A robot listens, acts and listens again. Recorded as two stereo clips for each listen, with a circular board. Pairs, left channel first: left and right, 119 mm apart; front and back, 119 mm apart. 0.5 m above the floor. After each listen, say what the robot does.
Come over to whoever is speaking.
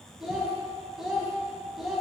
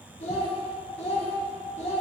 Drive 1.0 m forward.
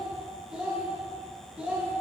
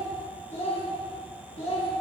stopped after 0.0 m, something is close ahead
Turn 10° right.
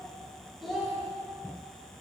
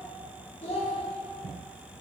Blocked. The child speaking is further on, straight ahead.